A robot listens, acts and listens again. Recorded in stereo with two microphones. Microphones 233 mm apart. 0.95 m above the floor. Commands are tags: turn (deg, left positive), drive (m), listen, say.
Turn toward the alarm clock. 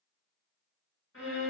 <listen/>
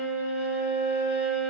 <listen/>
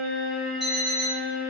<turn deg="30"/>
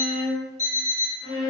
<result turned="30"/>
<turn deg="150"/>
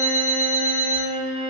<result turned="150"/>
<turn deg="-30"/>
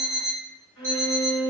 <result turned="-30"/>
<turn deg="-10"/>
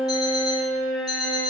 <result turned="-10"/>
<say>Facing the alarm clock, 1 to 2 m away.</say>